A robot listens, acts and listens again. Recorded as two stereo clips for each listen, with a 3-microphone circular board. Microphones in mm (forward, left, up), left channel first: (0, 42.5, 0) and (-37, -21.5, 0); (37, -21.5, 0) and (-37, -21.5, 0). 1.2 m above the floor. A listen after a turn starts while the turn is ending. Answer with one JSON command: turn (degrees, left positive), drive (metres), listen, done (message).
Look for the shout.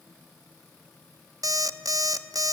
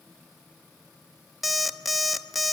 {"listen": true}
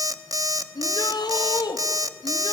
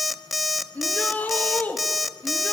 {"turn": 70}
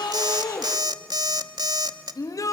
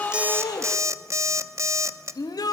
{"turn": 25}
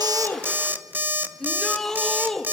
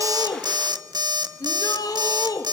{"turn": -25}
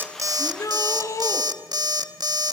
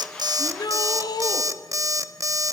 {"turn": 20}
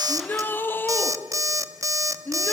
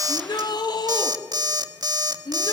{"done": "Facing the shout, 2 to 4 m away."}